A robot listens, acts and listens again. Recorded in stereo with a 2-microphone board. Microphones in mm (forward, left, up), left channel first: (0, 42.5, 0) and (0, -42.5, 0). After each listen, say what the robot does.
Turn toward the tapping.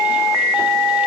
Keep listening.
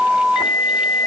Keep listening.
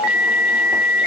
I can't make out tapping.